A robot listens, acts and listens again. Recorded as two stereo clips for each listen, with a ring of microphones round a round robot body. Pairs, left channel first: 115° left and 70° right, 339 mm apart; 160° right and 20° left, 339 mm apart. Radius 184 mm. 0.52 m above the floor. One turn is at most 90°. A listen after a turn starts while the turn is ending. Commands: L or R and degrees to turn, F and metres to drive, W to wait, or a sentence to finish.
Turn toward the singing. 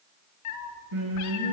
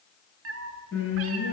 R90
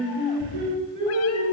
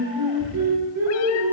Facing the singing.